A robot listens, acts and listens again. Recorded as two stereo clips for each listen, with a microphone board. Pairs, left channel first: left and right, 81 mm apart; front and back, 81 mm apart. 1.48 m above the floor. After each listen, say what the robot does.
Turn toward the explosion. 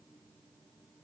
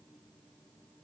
Keep listening.
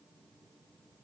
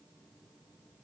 Keep listening.
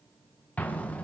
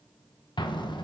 Turn 20° left.
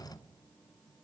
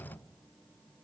Found it: an explosion, straight ahead.